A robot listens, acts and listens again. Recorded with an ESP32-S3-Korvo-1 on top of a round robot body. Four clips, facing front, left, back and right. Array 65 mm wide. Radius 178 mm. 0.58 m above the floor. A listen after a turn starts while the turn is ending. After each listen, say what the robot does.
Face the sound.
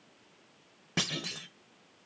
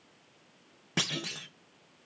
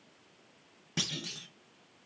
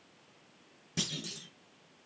Turn 55° left.
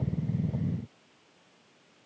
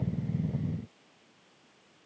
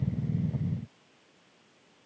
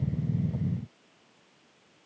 I heard a clunk from this way, but can't make it out now.